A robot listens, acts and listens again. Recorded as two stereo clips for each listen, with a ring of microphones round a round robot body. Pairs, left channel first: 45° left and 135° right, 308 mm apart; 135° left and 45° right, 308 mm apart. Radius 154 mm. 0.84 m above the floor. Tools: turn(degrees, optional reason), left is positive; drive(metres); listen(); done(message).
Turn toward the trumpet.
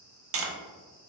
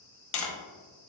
listen()
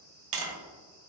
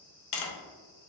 listen()
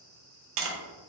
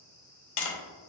done("I can't make out a trumpet, only tapping.")